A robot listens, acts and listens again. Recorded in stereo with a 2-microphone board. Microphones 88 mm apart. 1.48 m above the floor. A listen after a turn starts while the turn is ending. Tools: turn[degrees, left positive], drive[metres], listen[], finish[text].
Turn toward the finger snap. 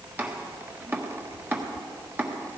Action: listen[]
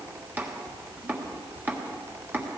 Action: listen[]
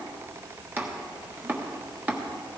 Action: finish[I can't make out a finger snap to turn to.]